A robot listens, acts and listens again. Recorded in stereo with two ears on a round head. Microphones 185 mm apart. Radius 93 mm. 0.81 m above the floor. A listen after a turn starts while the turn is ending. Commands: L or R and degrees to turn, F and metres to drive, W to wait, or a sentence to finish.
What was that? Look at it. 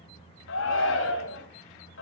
L65
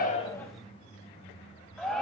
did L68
Found it: a shout, straight ahead.